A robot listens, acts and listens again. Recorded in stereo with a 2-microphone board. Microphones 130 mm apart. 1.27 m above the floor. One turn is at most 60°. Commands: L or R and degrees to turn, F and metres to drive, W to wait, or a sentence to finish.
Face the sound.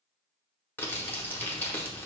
L15
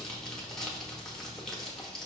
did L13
Found it: crumpling, straight ahead, under 1 m away.